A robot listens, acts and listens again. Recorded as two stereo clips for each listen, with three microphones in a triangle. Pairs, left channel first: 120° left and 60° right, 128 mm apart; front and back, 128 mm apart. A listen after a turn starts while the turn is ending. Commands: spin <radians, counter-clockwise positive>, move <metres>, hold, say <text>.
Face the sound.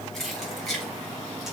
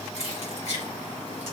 spin 0.52
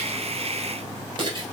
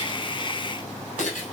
spin -0.17
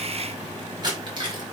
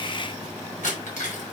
spin -0.17
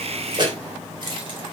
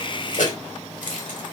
spin -0.17
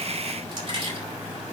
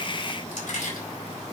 spin -0.17
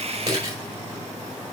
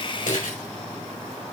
say Facing the keys jangling.